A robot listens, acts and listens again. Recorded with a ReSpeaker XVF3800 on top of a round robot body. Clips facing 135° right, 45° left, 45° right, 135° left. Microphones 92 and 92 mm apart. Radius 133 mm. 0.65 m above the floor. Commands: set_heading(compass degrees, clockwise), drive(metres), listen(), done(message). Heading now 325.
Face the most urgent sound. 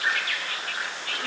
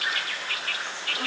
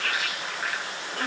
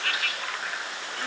listen()
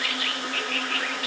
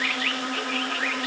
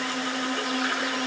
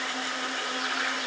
listen()
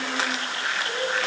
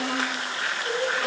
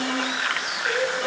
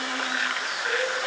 set_heading(220)
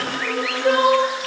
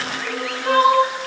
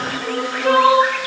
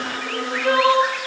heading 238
set_heading(223)
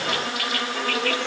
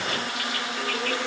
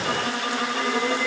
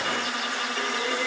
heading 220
listen()
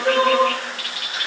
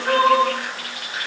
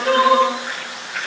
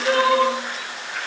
done("Facing the crying.")